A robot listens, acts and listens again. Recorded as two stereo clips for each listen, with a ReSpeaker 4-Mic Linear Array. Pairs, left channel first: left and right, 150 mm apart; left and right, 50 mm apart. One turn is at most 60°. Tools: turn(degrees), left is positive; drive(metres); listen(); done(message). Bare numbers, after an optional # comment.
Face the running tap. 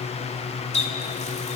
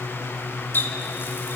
# The running tap: about 45° left or 135° left.
turn(45)
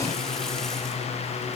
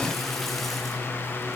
listen()
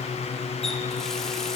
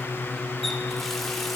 listen()
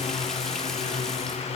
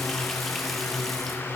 done("I heard a running tap, but can't make it out now. It was about straight ahead or 90° left.")